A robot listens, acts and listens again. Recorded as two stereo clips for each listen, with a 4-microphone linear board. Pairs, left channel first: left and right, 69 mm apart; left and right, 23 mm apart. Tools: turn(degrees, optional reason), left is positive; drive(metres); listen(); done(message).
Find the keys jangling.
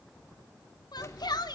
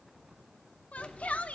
turn(degrees=40, reason="The keys jangling: about 40° left or 140° left.")
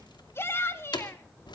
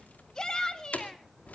turn(degrees=95, reason="So it is at 95° left.")
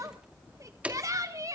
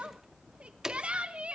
turn(degrees=-20, reason="The keys jangling is now 20° right.")
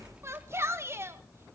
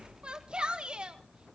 listen()
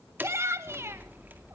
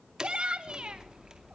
turn(degrees=-25, reason="The keys jangling is now 25° right.")
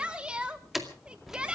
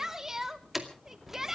done("Facing the keys jangling.")